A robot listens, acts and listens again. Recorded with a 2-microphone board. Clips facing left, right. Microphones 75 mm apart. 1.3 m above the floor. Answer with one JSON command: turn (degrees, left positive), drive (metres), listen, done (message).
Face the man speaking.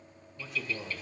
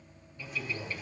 {"turn": 70}
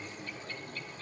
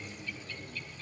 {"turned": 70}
{"listen": true}
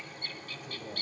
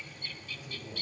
{"turn": 50}
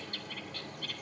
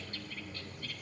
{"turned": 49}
{"listen": true}
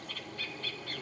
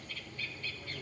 {"listen": true}
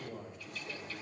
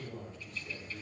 {"turn": 15}
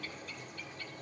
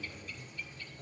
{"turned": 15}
{"listen": true}
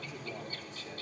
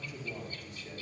{"done": "Found it: a man speaking, straight ahead, over 4 m away."}